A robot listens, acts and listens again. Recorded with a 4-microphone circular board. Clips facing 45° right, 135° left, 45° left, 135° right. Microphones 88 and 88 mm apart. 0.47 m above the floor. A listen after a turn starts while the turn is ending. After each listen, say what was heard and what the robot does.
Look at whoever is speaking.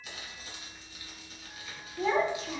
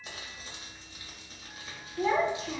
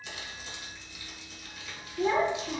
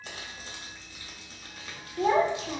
The child speaking: 140° right. Turn 140° right.
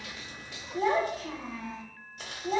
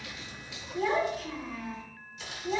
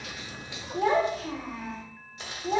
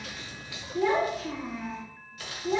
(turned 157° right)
The child speaking is now 15° left. Turn 15° left.
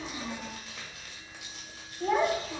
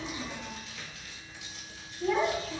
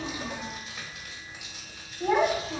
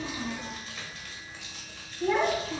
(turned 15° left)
Found it: a child speaking, straight ahead, 1 to 2 m away.